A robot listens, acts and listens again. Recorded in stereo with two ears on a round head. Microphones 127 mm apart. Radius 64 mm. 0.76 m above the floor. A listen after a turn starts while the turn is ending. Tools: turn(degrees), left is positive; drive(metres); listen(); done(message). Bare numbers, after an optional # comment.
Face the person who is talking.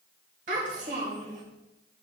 # The child speaking: about 55° right or 125° right.
turn(-55)
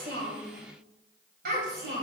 # So it is at 75° right.
turn(-75)
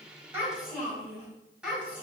# The child speaking is now 10° right.
turn(-10)
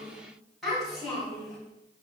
done("Facing the child speaking.")